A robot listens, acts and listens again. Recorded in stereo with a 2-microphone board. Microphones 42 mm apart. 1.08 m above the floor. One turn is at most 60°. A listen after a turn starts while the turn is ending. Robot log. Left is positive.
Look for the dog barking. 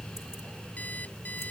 cmd idle
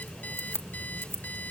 cmd idle
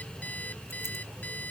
end: I can't make out a dog barking to turn to.